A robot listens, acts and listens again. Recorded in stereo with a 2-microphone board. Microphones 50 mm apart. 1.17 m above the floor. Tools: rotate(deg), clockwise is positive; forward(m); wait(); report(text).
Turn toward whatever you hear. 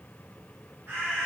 rotate(45)
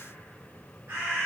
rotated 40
rotate(95)
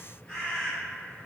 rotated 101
rotate(-10)
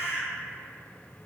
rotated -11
report("Facing the bird, 1 to 2 m away.")